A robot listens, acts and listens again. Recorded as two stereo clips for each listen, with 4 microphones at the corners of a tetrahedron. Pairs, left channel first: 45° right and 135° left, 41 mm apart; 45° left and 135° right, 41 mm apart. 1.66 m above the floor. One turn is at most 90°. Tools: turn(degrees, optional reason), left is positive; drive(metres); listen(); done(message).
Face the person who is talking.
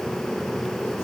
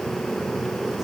listen()
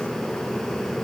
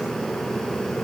listen()
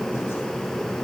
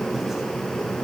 done("I can't make out anyone speaking to turn to.")